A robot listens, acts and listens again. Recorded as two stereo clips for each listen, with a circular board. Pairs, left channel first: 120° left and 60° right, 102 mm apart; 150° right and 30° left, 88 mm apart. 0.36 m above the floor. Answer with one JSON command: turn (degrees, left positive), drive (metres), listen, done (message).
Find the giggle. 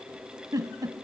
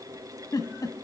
{"turn": -110}
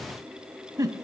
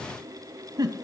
{"turn": -10}
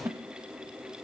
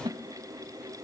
{"done": "Facing the giggle, under 1 m away."}